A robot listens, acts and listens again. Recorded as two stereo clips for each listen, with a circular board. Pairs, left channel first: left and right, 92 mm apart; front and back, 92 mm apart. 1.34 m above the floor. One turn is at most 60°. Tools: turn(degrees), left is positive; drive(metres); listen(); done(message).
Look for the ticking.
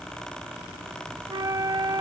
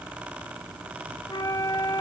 listen()
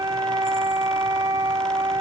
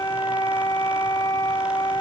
listen()
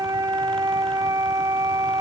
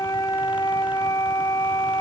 done("I can't make out ticking, only a flute.")